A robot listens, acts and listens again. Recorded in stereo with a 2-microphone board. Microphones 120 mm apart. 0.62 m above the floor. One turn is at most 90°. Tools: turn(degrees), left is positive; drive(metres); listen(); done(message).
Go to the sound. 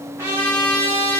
turn(degrees=-20)
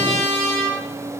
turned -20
turn(degrees=-90)
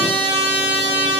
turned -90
turn(degrees=-45)
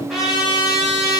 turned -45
drive(metres=1.0)
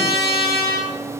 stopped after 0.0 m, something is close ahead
done("Something is in my way. I am facing the trumpet but have not reached it.")